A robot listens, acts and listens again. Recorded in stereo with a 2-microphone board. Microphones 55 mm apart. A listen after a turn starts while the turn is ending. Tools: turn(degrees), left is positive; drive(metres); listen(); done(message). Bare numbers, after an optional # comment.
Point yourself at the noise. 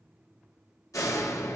turn(90)
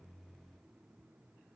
done("Facing where the door slam came from. I can't hear it now.")